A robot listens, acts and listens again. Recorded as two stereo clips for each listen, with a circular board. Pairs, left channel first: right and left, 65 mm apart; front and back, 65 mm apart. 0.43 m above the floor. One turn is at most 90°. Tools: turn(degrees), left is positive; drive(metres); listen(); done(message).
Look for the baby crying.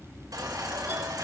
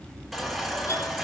turn(degrees=90)
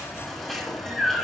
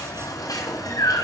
turn(degrees=-10)
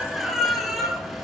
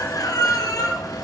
done("Found it: a baby crying, straight ahead, over 4 m away.")